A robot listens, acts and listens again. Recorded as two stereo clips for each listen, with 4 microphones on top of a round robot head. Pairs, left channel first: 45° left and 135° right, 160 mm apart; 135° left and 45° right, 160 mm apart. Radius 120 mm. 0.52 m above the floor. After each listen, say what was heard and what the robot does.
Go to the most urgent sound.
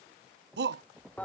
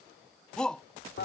The shout: 140° right. Turn 140° right.
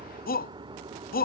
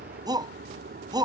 The shout is now 20° left. Turn 20° left.
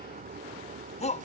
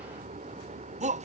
Drive 1.0 m forward.
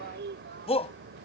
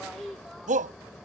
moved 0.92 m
Drive 1.0 m forward.
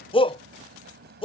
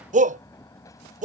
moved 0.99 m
The shout is now 10° right. Turn 10° right.
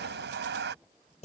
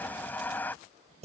Drive 1.0 m forward.
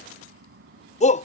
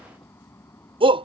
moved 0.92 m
The shout is now 10° left. Turn 10° left.
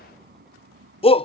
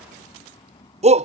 Drive 1.0 m forward.
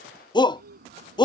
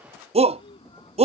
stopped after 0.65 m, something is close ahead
The shout is now 10° right. Turn 10° right.
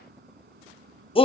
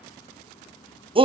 Arrived at the shout, straight ahead.